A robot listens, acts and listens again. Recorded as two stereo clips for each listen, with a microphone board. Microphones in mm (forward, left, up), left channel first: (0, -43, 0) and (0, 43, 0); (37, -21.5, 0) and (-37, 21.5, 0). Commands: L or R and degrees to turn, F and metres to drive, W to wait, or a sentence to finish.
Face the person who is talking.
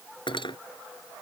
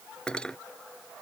W
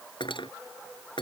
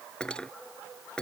W
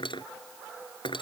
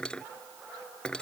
I can't make out anyone speaking, only cutlery clinking.